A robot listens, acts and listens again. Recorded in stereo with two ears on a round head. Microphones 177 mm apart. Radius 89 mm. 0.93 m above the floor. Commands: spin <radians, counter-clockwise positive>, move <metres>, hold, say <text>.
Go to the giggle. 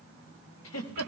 spin 1.57
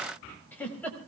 spin 0.17
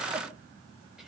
hold
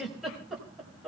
move 1.0
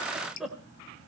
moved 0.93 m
move 1.0
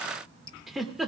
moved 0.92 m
move 1.0
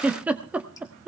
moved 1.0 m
move 1.0
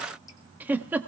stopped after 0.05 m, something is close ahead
spin -0.17
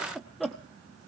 say Arrived at the giggle, straight ahead.